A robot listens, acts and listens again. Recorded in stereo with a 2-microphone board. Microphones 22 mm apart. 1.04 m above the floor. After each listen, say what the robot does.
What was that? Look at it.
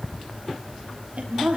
Turn 90° right.
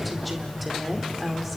Found it: a woman speaking, straight ahead, over 4 m away.